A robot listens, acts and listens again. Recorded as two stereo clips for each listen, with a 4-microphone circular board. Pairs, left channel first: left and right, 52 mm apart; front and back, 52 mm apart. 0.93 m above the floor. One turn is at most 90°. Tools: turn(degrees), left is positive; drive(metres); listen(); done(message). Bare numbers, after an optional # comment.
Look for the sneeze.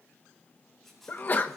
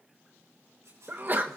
# The sneeze: 135° left.
turn(90)
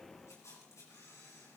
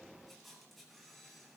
# Nothing new. It was at 45° left.
turn(45)
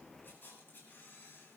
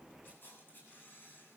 done("I heard a sneeze from this way, but can't make it out now.")